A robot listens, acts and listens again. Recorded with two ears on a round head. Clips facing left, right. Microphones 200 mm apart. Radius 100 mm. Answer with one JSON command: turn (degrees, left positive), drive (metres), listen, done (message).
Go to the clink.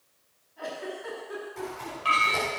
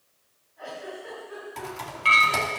{"turn": -35}
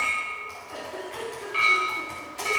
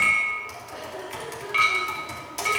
{"turn": -110}
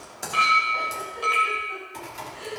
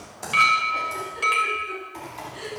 {"turn": -35}
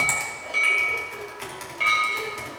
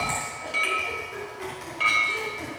{"drive": 1.0}
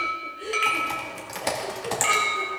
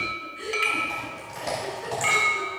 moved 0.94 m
{"drive": 1.0}
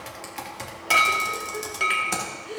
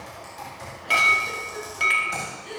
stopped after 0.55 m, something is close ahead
{"done": "I am next to the clink."}